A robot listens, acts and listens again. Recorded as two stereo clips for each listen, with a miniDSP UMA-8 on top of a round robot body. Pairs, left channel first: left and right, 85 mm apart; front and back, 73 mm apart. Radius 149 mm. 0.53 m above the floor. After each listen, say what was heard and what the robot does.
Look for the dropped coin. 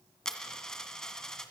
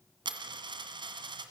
The dropped coin: 175° left. Turn 175° left.
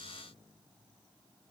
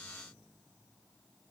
I heard a dropped coin from this way, but can't make it out now.